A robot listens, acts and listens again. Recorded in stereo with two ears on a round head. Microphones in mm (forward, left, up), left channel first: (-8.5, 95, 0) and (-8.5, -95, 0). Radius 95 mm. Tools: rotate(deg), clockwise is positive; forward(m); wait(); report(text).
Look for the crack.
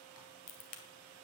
rotate(-40)
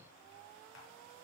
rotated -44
wait()
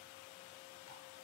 report("I heard a crack, but can't make it out now. It was about 5° right or 95° left.")